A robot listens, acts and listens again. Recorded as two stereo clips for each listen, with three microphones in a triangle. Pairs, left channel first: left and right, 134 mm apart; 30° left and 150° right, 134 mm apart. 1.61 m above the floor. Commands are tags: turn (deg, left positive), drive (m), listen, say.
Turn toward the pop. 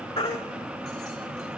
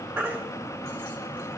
<listen/>
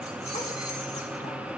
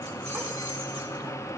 <listen/>
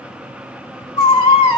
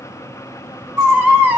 <say>I can't make out a pop, only a baby crying.</say>